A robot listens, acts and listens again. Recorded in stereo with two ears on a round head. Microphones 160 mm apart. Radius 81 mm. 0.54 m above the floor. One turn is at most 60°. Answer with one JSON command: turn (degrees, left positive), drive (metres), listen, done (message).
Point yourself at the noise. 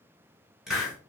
{"turn": -30}
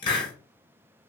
{"turn": 30}
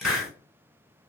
{"done": "Facing the hiss, 1 to 2 m away."}